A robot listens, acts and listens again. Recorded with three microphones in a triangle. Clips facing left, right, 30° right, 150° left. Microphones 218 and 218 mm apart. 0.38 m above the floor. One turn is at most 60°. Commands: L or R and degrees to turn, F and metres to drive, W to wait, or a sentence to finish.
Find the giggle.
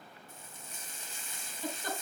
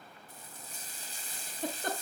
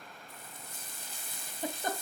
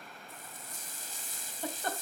R60
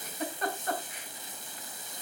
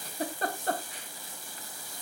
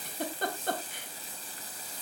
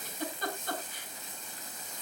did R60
R40
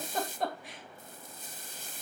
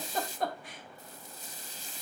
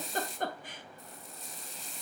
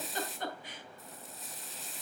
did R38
Facing the giggle.